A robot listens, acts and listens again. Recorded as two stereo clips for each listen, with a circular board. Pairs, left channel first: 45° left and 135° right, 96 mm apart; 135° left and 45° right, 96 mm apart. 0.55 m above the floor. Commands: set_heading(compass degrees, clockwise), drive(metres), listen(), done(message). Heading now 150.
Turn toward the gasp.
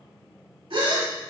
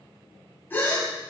set_heading(310)
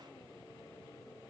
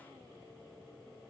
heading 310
done("Facing where the gasp came from. I can't hear it now.")